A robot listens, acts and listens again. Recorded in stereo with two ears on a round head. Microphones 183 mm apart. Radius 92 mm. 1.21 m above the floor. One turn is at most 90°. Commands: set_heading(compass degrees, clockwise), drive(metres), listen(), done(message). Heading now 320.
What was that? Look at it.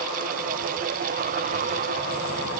listen()
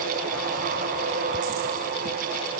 listen()
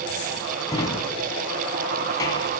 set_heading(300)
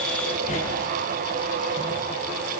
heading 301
listen()
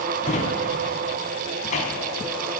set_heading(211)
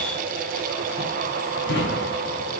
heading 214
set_heading(159)
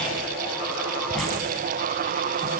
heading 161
listen()
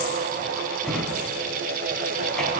done("Found it: a drawer, straight ahead.")